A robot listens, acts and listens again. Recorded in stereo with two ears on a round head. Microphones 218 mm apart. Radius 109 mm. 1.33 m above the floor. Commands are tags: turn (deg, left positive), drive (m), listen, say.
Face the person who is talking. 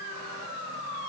<listen/>
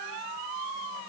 <listen/>
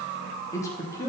<turn deg="30"/>
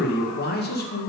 <turn deg="140"/>
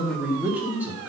<say>Facing the man speaking, 1 to 2 m away.</say>